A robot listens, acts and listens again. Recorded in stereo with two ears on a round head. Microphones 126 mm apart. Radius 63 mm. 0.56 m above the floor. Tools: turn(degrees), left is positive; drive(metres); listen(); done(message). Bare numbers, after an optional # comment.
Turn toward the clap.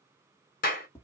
# The clap: about 65° left or 115° left.
turn(65)
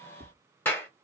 # So it is at 15° left.
turn(15)
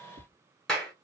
done("Facing the clap, 1 to 2 m away.")